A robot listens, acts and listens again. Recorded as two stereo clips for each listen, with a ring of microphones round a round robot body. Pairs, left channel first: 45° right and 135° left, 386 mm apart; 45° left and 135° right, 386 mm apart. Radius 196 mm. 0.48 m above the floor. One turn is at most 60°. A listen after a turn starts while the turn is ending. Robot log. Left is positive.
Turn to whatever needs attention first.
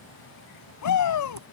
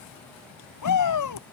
end: Found it: a shout, straight ahead.